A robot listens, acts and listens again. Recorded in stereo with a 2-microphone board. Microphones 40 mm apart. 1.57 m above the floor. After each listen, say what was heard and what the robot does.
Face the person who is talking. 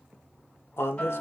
Turn 90° left.
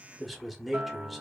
Found it: a man speaking, straight ahead.